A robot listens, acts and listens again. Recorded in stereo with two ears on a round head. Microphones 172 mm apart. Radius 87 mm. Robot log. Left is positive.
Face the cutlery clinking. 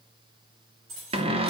cmd yaw -90
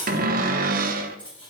end: Found it: cutlery clinking, straight ahead, over 4 m away.